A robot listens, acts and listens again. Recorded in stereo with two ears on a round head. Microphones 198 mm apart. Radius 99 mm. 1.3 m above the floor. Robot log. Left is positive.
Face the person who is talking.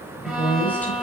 cmd yaw +30
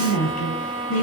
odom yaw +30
note: So it is at 140° left.
cmd yaw +140
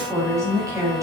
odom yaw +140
note: The woman speaking is now 15° right.
cmd yaw -15
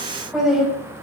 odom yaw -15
end: Facing the woman speaking.